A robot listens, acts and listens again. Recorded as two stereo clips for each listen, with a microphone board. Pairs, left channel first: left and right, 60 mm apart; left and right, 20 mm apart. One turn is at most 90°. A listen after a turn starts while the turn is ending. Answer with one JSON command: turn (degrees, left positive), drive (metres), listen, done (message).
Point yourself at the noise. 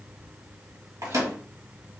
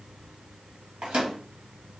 {"turn": -70}
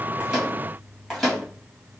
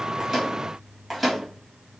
{"done": "Facing the microwave."}